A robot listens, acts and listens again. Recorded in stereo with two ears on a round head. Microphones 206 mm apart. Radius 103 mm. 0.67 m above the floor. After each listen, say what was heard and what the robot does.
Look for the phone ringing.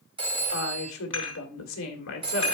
The phone ringing: about 25° right or 155° right. Turn 25° right.
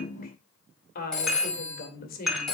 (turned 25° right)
Facing the phone ringing, 2 to 4 m away.